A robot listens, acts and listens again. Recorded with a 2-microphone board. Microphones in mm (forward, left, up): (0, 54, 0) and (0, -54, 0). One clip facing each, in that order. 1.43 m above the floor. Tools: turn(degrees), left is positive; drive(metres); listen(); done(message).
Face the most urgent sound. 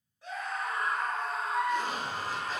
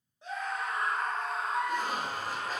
turn(degrees=-25)
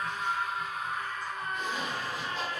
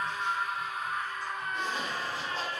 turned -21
done("Facing the scream, 1 to 2 m away.")